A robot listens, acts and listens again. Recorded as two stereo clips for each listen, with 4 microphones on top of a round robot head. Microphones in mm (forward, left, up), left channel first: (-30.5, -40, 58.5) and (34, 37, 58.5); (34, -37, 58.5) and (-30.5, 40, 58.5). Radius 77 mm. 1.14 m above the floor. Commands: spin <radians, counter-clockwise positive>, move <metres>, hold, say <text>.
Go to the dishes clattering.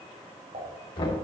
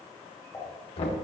spin 0.35
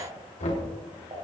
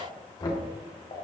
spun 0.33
move 1.0
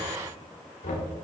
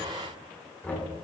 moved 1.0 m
hold
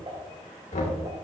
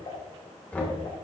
move 1.0
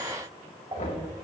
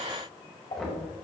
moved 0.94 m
move 1.0
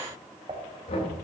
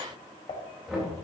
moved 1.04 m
move 1.0
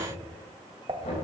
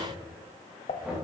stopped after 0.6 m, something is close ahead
say Arrived at the dishes clattering, straight ahead.